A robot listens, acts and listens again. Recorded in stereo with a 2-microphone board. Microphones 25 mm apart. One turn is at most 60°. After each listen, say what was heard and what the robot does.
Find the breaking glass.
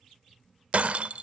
The breaking glass: about 60° right or 120° right. Turn 60° right.
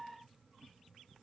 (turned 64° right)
Keep listening.
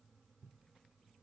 I heard breaking glass, but can't make it out now. It was about 5° left or 55° right.